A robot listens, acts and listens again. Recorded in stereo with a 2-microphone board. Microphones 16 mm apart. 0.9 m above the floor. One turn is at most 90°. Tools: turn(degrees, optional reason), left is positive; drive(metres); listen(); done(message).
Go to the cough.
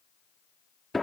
listen()
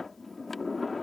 listen()
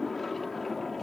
done("I can't make out a cough, only a sliding door.")